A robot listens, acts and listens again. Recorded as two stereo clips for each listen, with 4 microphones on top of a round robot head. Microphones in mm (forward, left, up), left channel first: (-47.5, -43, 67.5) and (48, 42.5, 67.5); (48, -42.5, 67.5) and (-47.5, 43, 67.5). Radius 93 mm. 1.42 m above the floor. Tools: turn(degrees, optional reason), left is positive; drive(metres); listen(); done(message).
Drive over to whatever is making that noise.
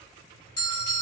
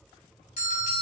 turn(degrees=-75, reason="The bell: 75° right.")
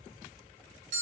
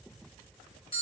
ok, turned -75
turn(degrees=10, reason="The bell is now 10° left.")
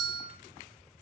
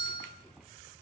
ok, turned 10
drive(metres=1.0)
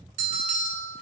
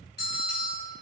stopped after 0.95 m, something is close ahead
done("Arrived at the bell, straight ahead.")